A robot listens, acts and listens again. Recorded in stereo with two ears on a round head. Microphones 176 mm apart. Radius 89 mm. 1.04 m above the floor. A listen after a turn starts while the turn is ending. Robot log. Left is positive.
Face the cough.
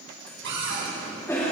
note: The cough: about 15° left or 165° left.
cmd yaw +15
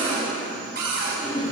note: So it is at 150° left.
cmd yaw +150
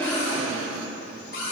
note: The cough is now 35° right.
cmd yaw -35
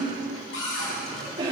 note: The cough is now 25° right.
cmd yaw -25
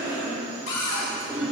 note: The cough is now 15° right.
cmd yaw -15
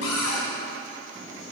cmd idle
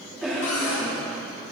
end: Found it: a cough, straight ahead, 2 to 4 m away.